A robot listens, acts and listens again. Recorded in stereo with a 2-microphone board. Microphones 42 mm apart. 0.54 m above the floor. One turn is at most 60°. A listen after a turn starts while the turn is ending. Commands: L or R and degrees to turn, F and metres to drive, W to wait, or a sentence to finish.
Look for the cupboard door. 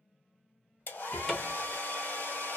L30
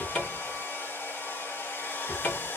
L60
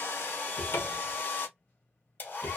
L60
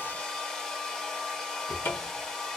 L55
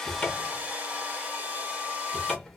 L10
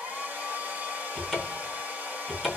Found it: a cupboard door, straight ahead, under 1 m away.